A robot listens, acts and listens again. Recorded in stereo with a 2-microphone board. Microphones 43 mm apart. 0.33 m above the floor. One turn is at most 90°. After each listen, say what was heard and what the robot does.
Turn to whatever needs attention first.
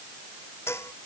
Keep listening.
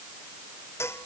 Keep listening.
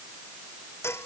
I can't make out anything urgent, only dishes clattering.